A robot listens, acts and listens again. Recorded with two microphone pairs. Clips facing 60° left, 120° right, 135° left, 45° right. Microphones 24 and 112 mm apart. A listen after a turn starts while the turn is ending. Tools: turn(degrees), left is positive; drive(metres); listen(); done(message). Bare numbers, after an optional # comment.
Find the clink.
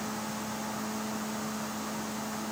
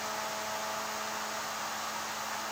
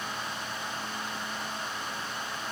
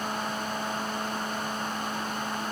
listen()
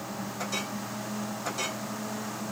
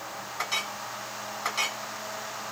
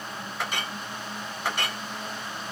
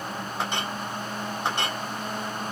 # The clink: 105° right.
turn(-105)
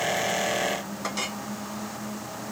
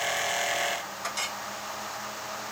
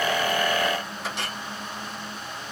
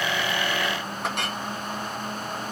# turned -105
# The clink is now 25° right.
turn(-25)
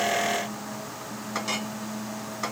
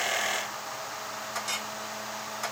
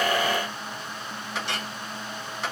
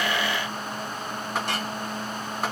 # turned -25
# The clink is now 10° right.
turn(-10)
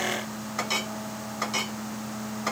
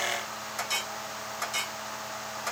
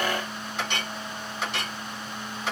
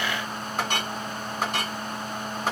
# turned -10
done("Facing the clink, 1 to 2 m away.")